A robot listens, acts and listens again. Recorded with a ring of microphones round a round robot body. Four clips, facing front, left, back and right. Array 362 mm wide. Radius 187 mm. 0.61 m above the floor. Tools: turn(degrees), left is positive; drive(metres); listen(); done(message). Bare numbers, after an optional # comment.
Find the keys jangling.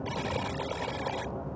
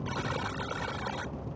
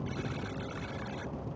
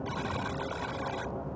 listen()
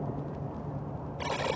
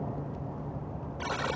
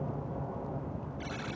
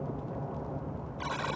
listen()
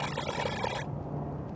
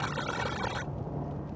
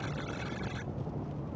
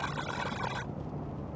done("I can't make out keys jangling, only a buzzer.")